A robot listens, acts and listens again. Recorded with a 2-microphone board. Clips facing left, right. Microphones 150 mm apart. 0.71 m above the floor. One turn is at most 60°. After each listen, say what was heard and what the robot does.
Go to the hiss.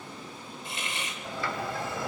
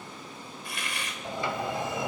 The hiss: about 25° left or 155° left. Turn 25° left.
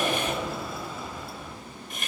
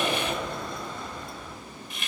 So it is at 130° left. Turn 60° left.
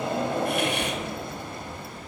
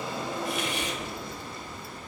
Nothing new. It was at 70° left. Turn 60° left.
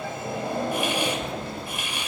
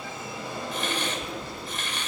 The hiss is now 10° left. Turn 10° left.
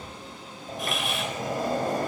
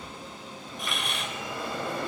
Drive 1.0 m forward.
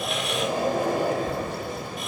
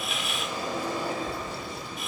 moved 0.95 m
Keep listening.
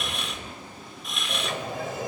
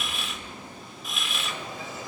Drive 1.0 m forward.
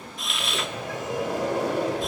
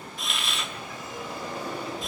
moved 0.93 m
Drive 1.0 m forward.
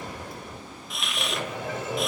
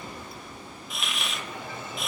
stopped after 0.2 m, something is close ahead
Arrived at the hiss, straight ahead.